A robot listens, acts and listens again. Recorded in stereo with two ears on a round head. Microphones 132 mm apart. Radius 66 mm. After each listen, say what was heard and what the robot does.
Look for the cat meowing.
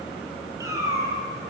The cat meowing: about 20° right or 160° right. Turn 20° right.
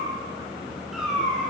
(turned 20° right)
Turn 30° right.
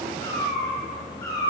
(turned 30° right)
So it is at 25° left. Turn 25° left.
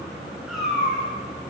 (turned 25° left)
Facing the cat meowing.